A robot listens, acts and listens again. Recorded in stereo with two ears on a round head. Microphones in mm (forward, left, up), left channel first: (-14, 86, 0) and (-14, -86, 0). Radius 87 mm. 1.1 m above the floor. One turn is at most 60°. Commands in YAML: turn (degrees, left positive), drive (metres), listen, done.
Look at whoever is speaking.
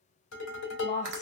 turn: 40
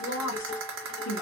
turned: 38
turn: 60
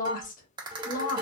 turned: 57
turn: 45
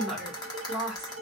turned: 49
done: "Facing the woman speaking, 1 to 2 m away."